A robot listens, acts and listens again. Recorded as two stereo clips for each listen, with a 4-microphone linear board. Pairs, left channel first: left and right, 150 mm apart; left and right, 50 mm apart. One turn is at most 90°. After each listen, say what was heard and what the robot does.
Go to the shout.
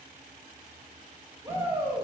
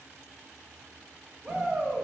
The shout: about 15° right or 165° right. Turn 15° right.
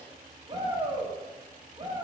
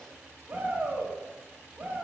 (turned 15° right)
So it is at 150° right. Turn 90° right.
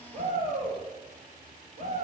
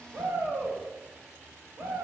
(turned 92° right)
The shout is now 55° right. Turn 55° right.
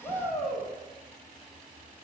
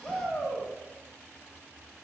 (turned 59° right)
Drive 1.0 m forward.
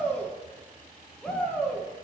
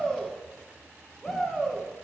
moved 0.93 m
Drive 1.0 m forward.
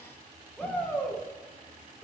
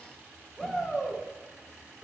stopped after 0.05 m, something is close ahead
The shout is now 10° left. Turn 10° left.
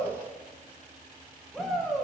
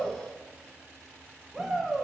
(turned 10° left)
I am next to the shout.